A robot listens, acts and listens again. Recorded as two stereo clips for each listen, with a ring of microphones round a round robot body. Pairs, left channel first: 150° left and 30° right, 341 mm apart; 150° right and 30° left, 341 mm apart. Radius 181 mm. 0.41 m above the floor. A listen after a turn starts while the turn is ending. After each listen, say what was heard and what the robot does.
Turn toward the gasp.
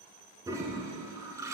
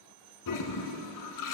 Keep listening.
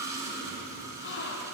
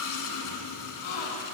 The gasp: 150° right. Turn 150° right.
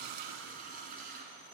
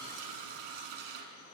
Facing where the gasp came from. I can't hear it now.